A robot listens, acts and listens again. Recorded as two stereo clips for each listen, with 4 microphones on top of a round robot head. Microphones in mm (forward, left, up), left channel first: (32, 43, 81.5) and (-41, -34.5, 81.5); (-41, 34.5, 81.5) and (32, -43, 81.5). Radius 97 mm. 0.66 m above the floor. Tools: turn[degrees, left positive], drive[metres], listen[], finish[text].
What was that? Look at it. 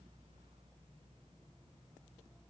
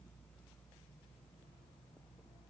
Action: listen[]
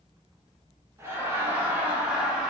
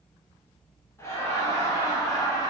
Thought: The laughter: 145° left.
Action: turn[145]
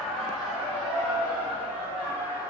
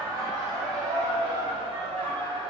Thought: The laughter is now 65° right.
Action: turn[-65]
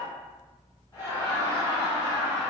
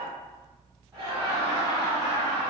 Action: finish[Found it: laughter, straight ahead, 1 to 2 m away.]